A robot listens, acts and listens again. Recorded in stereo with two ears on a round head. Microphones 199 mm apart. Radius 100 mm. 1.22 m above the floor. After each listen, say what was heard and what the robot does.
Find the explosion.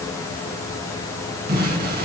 The explosion: about 45° right or 135° right. Turn 45° right.
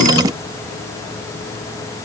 Keep listening.
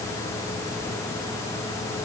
I heard an explosion, but can't make it out now. It was about straight ahead or 90° right.